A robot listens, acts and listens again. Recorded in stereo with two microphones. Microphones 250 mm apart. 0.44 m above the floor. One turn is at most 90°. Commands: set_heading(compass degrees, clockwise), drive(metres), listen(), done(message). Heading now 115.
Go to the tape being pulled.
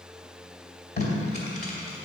set_heading(75)
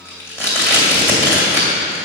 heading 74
set_heading(64)
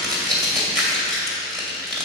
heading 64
drive(1.0)
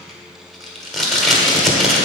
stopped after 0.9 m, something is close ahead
done("I am next to the tape being pulled.")